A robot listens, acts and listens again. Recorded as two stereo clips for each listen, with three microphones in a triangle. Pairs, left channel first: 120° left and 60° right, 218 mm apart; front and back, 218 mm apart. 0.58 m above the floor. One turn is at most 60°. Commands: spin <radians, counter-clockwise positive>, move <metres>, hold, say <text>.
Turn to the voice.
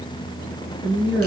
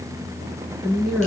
spin -1.05
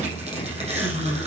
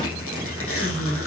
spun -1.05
spin -0.52
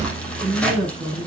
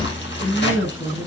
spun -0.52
say Facing the woman speaking, over 4 m away.